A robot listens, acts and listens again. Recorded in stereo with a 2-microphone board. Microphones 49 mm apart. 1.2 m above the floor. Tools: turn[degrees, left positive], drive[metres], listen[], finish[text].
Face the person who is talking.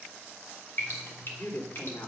Thought: The woman speaking: about 55° left or 125° left.
Action: turn[55]
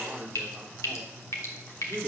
Action: finish[Facing the woman speaking.]